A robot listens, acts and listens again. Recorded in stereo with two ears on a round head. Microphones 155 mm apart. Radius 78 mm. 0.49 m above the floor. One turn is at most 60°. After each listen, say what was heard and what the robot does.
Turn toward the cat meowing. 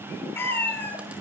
Turn 30° left.
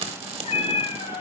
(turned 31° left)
So it is at 145° left. Turn 60° left.
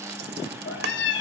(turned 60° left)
The cat meowing is now 80° left. Turn 60° left.
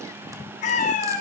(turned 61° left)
The cat meowing is now 45° left. Turn 45° left.
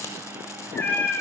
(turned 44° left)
The cat meowing is now 10° left. Turn 10° left.
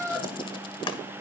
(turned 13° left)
Facing the cat meowing, over 4 m away.